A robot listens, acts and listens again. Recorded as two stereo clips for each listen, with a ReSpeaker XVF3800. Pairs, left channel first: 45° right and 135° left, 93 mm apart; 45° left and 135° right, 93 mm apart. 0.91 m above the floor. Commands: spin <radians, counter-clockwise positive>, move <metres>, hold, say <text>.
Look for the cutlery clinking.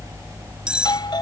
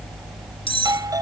spin 0.96
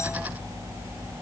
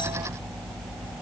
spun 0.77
spin 0.17
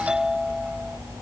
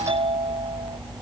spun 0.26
hold
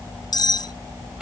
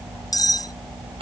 say Facing the cutlery clinking.